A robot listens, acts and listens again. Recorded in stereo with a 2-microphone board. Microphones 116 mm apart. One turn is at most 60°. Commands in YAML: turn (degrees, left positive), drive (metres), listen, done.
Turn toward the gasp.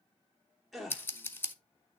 turn: 30
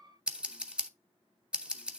listen: true
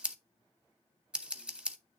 done: "I heard a gasp, but can't make it out now. It was about 30° right or 150° left."